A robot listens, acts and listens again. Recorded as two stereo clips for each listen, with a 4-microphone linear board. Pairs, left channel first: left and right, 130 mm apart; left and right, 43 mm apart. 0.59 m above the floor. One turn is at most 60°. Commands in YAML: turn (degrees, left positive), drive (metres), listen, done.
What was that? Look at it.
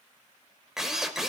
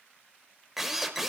turn: -30
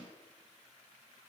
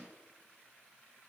listen: true
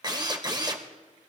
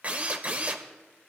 turn: -60
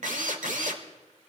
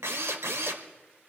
turn: -60
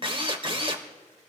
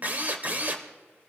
turn: -45
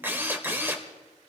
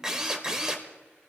turn: -15
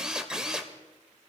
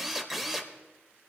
done: "Facing the drill, 1 to 2 m away."